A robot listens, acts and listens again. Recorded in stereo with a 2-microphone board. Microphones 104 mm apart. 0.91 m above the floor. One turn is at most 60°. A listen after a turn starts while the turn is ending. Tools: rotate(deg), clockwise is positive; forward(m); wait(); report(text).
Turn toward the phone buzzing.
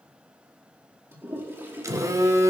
rotate(30)
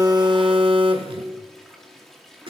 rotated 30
rotate(60)
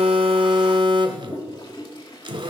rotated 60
rotate(55)
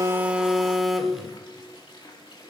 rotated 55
report("Found it: a phone buzzing, straight ahead, 1 to 2 m away.")